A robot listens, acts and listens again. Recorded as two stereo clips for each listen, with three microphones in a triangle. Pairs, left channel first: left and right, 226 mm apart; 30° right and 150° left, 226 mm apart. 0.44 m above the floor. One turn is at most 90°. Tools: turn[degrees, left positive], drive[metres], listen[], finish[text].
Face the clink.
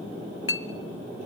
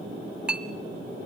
Thought: The clink: 65° left.
Action: turn[65]
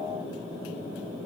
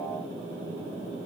Action: listen[]
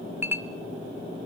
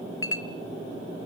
Thought: The clink is now 10° right.
Action: turn[-10]
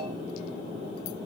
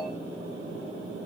Action: listen[]
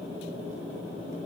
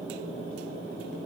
Action: listen[]
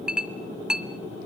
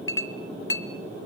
Action: finish[Found it: a clink, straight ahead, 1 to 2 m away.]